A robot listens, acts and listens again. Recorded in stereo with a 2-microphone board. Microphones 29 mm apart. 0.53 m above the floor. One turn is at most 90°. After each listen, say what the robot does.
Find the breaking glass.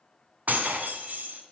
Turn 90° right.
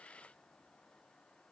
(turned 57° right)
Turn 35° right.
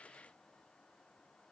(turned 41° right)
Turn 10° left.
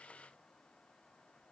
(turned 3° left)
Facing where the breaking glass came from. I can't hear it now.